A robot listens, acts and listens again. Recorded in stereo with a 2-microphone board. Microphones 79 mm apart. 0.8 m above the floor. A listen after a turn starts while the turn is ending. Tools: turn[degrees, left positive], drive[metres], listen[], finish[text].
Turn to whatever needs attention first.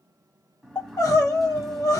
Thought: The crying: about 50° left or 130° left.
Action: turn[50]
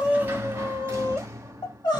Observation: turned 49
Thought: So it is at 80° left.
Action: turn[80]
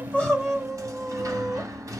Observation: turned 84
Action: finish[Found it: crying, straight ahead.]